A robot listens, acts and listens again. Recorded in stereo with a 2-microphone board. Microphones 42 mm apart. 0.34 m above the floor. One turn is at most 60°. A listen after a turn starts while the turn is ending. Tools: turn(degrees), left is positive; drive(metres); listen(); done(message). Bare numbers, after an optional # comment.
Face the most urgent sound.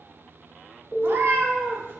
# The alarm: about 50° left or 130° left.
turn(50)
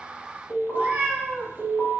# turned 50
# So it is at 70° left.
turn(60)
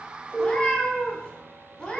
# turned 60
done("Found it: an alarm, straight ahead.")